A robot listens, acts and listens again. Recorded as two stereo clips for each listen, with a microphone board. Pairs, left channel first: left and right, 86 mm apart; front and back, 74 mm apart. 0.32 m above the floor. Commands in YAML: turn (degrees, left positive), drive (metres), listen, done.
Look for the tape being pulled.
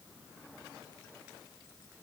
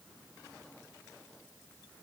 listen: true
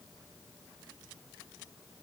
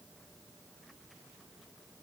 listen: true
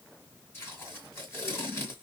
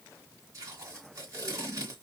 turn: 150
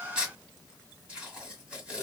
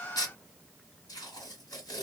turn: -10
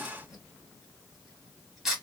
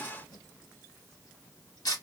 done: "Found it: tape being pulled, straight ahead, 1 to 2 m away."